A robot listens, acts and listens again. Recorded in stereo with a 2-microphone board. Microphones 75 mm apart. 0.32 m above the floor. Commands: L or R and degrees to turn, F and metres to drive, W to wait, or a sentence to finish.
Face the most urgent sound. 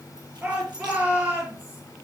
R25
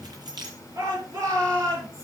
R130
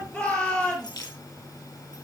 L20
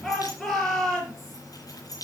Found it: a shout, straight ahead.